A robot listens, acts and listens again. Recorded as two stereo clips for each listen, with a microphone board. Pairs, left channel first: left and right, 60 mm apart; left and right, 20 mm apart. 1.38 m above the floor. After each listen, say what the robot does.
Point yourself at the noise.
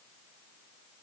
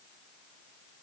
Keep listening.
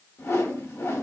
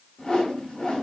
Turn 45° left.
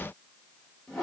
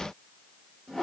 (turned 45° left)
Facing the whoosh.